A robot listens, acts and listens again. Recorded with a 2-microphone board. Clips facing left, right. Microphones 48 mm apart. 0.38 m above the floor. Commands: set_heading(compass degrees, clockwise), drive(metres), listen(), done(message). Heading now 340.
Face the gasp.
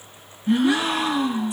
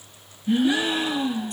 set_heading(275)
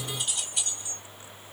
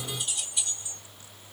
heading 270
listen()
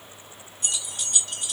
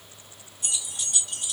done("I heard a gasp, but can't make it out now. It was about 5° right or 45° left.")